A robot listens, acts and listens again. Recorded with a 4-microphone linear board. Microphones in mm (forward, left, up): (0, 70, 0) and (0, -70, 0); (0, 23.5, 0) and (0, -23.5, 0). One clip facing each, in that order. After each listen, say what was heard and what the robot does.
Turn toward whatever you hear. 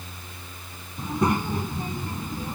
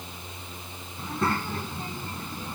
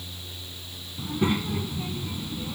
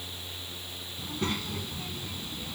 The child speaking: about 15° left or 165° left. Turn 15° left.
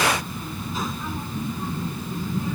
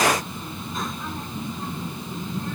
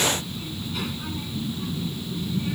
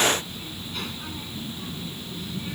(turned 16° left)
Turn 30° left.
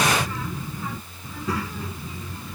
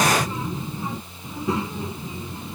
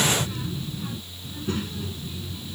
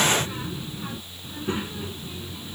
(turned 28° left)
So it is at 20° right. Turn 20° right.
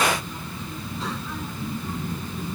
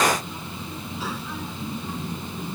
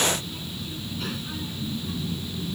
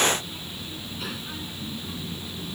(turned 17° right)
Found it: a child speaking, straight ahead.